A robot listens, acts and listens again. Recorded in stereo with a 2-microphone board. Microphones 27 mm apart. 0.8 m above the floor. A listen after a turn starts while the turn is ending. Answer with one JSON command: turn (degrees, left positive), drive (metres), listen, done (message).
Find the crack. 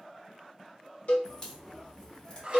{"turn": 25}
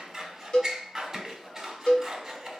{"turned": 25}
{"listen": true}
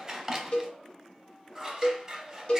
{"done": "I heard a crack, but can't make it out now. It was about straight ahead or 130° left."}